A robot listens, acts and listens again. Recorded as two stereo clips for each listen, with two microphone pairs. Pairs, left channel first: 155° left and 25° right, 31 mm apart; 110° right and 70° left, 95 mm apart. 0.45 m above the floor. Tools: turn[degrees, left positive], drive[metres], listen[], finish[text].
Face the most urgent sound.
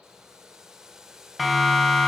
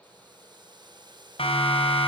Thought: The siren: 110° right.
Action: turn[-110]
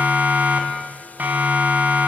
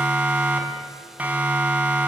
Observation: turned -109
Action: finish[Facing the siren, 2 to 4 m away.]